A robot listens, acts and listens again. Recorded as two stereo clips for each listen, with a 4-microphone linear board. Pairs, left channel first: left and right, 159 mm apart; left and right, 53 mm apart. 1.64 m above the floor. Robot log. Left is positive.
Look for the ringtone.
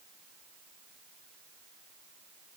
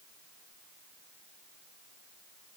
cmd idle
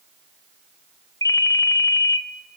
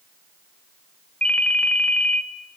note: The ringtone: about 20° left or 160° left.
cmd yaw +20
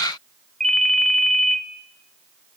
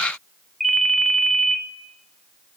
end: Found it: a ringtone, straight ahead, 1 to 2 m away.